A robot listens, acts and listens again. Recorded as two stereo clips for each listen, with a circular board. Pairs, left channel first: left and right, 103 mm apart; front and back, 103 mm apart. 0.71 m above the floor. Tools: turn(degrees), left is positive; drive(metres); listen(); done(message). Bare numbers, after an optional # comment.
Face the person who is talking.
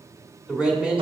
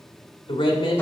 # The man speaking: 10° right.
turn(-10)
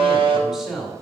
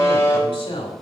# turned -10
done("Facing the man speaking, 2 to 4 m away.")